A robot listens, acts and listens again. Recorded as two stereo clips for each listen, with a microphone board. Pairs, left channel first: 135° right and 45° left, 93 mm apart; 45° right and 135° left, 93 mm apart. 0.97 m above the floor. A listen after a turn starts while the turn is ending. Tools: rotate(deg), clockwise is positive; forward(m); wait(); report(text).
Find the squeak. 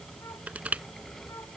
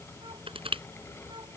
wait()
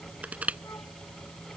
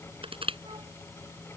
wait()
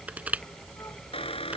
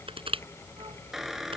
rotate(140)
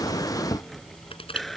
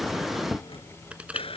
rotate(45)
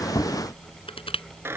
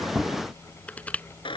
rotate(20)
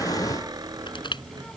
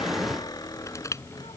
report("Found it: a squeak, straight ahead.")